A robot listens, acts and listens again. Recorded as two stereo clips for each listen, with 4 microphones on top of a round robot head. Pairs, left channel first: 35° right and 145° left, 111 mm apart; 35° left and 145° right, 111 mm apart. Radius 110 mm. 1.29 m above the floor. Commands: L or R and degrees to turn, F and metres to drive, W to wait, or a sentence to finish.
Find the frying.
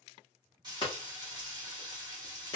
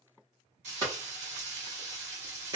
R160
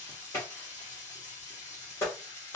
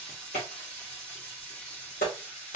R45
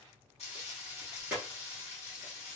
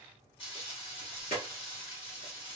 Facing the frying, 1 to 2 m away.